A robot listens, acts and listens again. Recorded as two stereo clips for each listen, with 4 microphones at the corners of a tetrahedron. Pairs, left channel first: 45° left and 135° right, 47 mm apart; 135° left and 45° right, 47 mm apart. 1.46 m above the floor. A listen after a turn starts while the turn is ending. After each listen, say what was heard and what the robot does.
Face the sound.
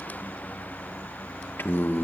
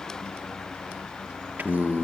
Facing the singing.